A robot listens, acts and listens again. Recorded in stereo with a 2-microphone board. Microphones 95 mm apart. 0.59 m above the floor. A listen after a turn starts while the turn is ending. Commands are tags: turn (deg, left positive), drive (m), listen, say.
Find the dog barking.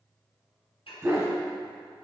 <turn deg="-30"/>
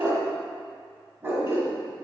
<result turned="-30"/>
<turn deg="-30"/>
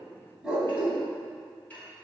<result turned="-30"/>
<turn deg="-15"/>
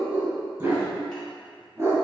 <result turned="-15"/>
<turn deg="-25"/>
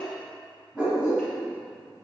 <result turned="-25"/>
<turn deg="-10"/>
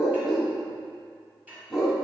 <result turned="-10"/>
<say>Found it: a dog barking, straight ahead.</say>